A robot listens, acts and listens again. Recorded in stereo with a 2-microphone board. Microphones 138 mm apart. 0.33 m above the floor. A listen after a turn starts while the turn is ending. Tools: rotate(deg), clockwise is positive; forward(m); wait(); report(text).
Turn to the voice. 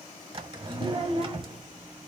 rotate(50)
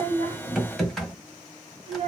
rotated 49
rotate(65)
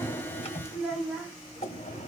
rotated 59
report("Facing the child speaking.")